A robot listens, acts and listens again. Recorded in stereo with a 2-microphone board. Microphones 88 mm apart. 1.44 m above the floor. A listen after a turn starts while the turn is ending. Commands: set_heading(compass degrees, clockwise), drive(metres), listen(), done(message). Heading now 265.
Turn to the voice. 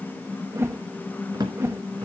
listen()
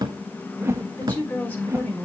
set_heading(250)
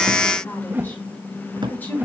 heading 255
set_heading(235)
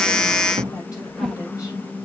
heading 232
set_heading(92)
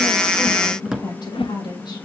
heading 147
set_heading(92)
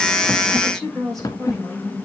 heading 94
done("Found it: a woman speaking, straight ahead.")